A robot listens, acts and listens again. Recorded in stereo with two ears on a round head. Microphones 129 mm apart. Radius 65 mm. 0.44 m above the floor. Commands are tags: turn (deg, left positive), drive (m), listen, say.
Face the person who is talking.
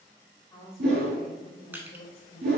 <turn deg="40"/>
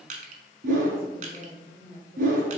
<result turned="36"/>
<turn deg="50"/>
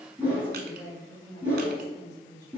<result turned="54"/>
<turn deg="15"/>
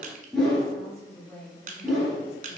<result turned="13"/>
<say>Facing the woman speaking, 2 to 4 m away.</say>